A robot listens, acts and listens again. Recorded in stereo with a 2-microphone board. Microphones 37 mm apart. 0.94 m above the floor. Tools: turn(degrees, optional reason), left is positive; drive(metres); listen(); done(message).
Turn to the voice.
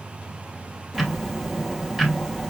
listen()
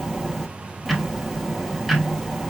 listen()
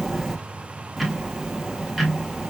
done("I can't make out anyone speaking to turn to.")